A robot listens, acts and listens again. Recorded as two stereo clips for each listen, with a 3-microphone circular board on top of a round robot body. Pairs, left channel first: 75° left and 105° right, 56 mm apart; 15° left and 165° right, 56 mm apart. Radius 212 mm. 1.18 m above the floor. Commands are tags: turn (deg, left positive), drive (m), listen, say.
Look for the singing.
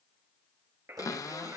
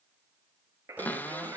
<turn deg="-140"/>
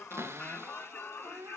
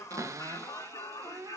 <turn deg="15"/>
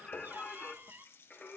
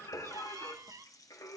<say>Facing the singing.</say>